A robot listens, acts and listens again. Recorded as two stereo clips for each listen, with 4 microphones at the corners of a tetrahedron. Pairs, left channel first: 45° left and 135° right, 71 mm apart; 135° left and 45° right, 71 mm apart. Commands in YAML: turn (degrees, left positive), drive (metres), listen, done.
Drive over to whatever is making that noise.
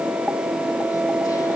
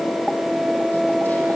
listen: true
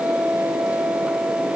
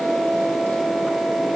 listen: true
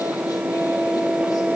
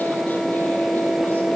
done: "I can't make out anything to turn to."